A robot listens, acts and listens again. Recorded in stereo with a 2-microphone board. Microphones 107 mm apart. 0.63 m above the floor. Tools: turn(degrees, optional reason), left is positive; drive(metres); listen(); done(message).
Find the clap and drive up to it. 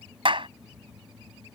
turn(degrees=-50, reason="The clap: about 50° right or 130° right.")
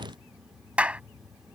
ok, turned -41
turn(degrees=-10, reason="So it is at 10° right.")
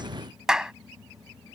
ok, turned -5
drive(metres=1.0)
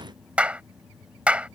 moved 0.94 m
turn(degrees=-10, reason="The clap is now 10° right.")
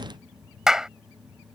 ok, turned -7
drive(metres=1.0)
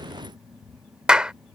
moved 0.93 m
turn(degrees=-10, reason="The clap is now 10° right.")
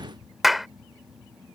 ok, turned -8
drive(metres=1.0)
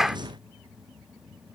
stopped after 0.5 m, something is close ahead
done("Arrived at the clap, straight ahead.")